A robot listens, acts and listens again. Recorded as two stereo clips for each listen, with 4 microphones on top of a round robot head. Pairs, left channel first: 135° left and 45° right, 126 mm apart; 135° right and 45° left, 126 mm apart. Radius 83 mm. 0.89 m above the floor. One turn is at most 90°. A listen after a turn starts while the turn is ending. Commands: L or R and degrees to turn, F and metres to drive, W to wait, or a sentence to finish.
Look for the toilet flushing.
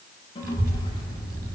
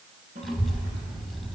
L80
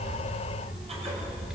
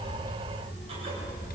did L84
W
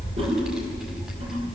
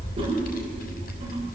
W
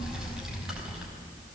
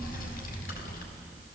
Facing where the toilet flushing came from. I can't hear it now.